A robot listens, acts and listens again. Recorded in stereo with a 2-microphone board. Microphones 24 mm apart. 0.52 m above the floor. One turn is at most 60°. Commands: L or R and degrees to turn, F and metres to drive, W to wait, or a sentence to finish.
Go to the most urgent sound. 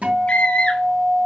L50
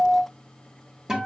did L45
W
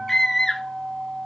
L10
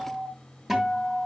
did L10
W
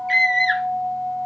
F1.0
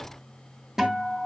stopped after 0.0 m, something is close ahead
W
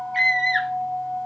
Something is in my way. I am facing the scream but have not reached it.